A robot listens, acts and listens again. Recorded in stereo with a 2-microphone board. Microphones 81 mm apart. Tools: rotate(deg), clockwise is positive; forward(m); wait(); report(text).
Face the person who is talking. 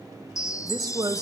rotate(60)
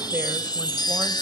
wait()
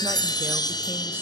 wait()
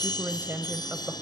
rotate(35)
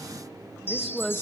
report("Facing the woman speaking.")